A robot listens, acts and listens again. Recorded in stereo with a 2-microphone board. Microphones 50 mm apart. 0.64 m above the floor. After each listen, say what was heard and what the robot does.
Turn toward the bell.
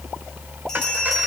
Turn 30° left.
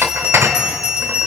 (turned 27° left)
So it is at 15° right. Turn 15° right.
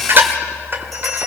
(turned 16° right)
Found it: a bell, straight ahead.